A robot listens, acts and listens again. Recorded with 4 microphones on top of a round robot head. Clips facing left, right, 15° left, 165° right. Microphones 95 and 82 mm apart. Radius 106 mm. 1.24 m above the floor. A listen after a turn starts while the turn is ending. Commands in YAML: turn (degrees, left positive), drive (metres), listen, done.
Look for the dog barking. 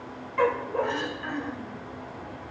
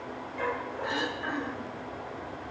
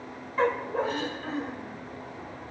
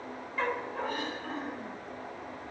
turn: 60
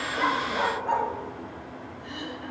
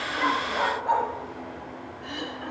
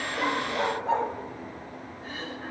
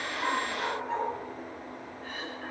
turn: -10
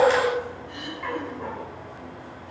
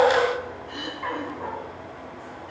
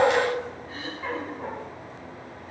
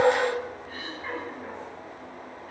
turn: -15
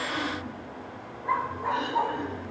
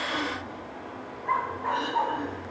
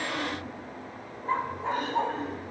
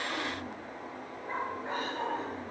done: "Found it: a dog barking, straight ahead."